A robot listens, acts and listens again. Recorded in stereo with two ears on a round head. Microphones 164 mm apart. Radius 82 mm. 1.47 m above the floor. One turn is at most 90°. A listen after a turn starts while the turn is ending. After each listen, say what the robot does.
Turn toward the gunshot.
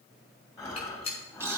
Turn 35° left.
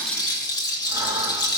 Keep listening.
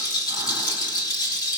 I heard a gunshot, but can't make it out now. It was about straight ahead or 110° left.